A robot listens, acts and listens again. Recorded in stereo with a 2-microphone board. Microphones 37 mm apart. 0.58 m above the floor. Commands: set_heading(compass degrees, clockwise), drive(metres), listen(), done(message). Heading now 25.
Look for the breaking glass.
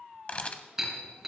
set_heading(55)
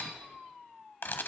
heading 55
listen()
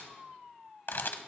done("I heard breaking glass, but can't make it out now. It was about 20° left or 140° right.")